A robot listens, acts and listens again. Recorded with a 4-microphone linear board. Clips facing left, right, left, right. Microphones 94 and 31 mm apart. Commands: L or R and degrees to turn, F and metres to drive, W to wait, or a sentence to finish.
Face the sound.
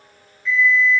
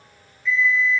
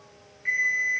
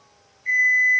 L55
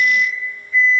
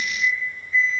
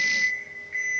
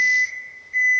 L65
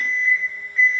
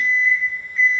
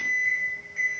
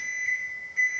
L10
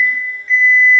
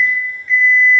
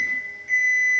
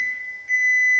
Found it: an alarm clock, straight ahead, under 1 m away.